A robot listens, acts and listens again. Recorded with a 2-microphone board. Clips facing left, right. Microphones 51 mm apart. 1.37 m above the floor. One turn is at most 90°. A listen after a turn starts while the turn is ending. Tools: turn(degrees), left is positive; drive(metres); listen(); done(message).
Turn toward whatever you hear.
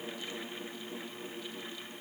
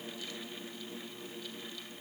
listen()
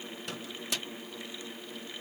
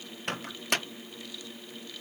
turn(degrees=-55)
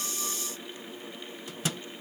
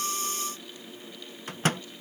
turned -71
turn(degrees=-50)
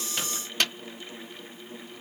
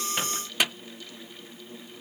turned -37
turn(degrees=-10)
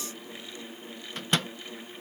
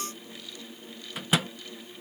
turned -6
done("Facing the microwave.")